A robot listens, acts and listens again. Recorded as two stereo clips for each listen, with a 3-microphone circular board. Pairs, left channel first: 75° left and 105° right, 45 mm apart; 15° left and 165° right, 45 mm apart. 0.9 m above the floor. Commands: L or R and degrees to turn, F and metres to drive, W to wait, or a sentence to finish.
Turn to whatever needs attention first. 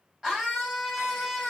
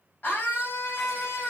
R35
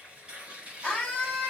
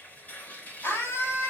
Found it: a scream, straight ahead, over 4 m away.